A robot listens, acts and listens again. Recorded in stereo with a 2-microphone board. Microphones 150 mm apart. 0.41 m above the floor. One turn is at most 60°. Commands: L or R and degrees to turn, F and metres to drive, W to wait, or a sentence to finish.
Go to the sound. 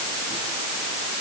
W
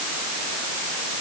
W
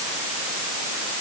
I can't make out anything.